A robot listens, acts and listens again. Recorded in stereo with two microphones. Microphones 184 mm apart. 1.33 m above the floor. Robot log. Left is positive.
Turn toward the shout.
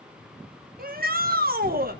note: The shout: about 55° right or 125° right.
cmd yaw -55
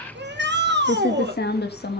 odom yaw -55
note: So it is at 70° right.
cmd yaw -70
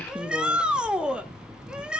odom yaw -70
end: Found it: a shout, straight ahead.